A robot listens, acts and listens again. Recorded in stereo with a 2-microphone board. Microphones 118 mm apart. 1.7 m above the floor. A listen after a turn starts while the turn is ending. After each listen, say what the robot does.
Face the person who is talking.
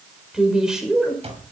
Turn 30° right.
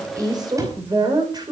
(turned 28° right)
Turn 145° right.
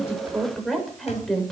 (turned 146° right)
Facing the woman speaking.